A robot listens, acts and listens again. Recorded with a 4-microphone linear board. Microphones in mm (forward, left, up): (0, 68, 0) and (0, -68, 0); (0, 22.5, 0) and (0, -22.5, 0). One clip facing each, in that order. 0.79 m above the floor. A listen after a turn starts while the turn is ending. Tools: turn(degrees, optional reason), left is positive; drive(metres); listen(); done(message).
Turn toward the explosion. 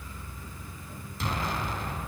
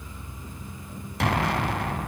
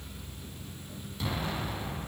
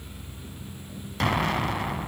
turn(degrees=-70, reason="The explosion: about 70° right or 110° right.")
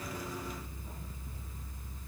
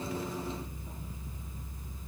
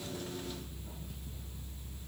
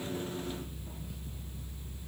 listen()
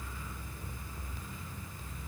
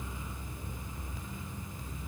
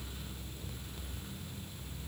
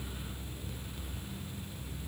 done("I heard an explosion, but can't make it out now. It was about straight ahead or 40° right.")